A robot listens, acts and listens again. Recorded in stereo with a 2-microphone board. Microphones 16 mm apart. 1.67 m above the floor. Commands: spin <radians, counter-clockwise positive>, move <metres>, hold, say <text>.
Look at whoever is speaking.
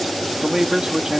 spin -0.79
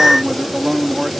spin -1.66
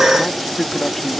spin 0.35
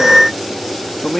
say Found it: a man speaking, straight ahead.